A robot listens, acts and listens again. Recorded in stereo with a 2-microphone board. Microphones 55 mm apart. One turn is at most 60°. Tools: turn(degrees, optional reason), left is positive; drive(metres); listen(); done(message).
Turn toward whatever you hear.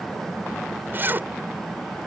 turn(degrees=-40, reason="The zipper: about 40° right or 140° right.")
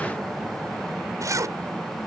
turn(degrees=-60, reason="So it is at 100° right.")
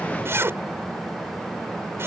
turn(degrees=-45, reason="The zipper is now 45° right.")
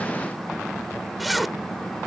done("Facing the zipper.")